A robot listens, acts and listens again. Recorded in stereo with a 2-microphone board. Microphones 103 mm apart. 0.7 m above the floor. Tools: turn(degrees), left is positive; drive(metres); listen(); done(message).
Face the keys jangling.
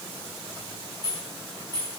turn(degrees=-35)
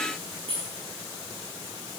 turn(degrees=-110)
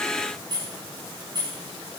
turn(degrees=-45)
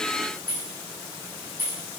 turn(degrees=-20)
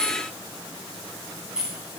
done("Found it: keys jangling, straight ahead, over 4 m away.")